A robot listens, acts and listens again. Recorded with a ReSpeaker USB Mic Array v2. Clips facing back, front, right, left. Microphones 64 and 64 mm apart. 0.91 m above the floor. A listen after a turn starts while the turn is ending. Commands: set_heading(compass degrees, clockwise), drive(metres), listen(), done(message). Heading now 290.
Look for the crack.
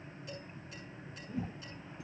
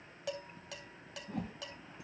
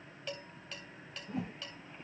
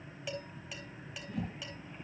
listen()
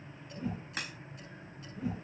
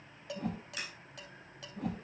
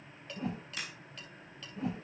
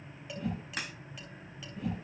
set_heading(155)
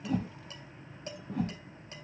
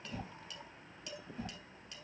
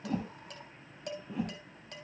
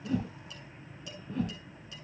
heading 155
done("I heard a crack from this way, but can't make it out now.")